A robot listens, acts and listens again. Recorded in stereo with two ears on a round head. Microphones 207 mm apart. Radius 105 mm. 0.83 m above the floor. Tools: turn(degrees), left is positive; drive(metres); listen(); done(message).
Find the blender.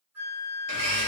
turn(degrees=-55)
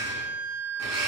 turn(degrees=-70)
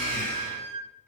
turn(degrees=10)
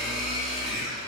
done("Found it: a blender, straight ahead.")